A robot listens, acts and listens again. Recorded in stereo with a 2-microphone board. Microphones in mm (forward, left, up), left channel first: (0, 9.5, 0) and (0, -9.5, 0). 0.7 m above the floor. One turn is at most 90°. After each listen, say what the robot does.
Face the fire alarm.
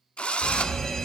Turn 35° left.
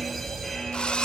Turn 10° left.
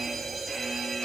Found it: a fire alarm, straight ahead.